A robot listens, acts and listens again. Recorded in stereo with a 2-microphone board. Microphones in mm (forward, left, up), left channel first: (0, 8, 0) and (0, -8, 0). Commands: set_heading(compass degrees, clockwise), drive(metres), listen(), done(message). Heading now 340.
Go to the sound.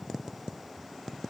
listen()
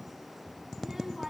set_heading(0)
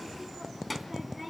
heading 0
drive(1.0)
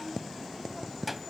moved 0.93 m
drive(1.0)
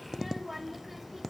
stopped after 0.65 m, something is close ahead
done("Arrived at the child speaking, straight ahead.")